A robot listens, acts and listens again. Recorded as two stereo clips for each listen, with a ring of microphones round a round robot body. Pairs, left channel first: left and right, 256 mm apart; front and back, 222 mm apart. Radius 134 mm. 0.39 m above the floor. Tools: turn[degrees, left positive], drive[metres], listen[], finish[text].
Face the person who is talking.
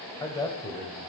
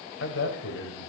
Thought: The man speaking: 10° left.
Action: turn[10]
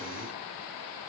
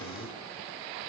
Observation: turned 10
Action: listen[]
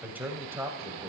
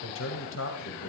Thought: The man speaking is now 15° right.
Action: turn[-15]
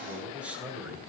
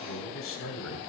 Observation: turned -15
Action: finish[Found it: a man speaking, straight ahead.]